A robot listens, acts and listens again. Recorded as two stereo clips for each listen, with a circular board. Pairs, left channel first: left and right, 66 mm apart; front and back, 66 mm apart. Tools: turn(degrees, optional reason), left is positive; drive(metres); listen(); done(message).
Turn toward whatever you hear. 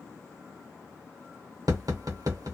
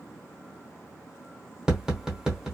turn(degrees=-100, reason="The tapping: 100° right.")
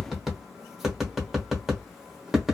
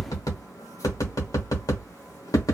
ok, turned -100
done("Facing the tapping, under 1 m away.")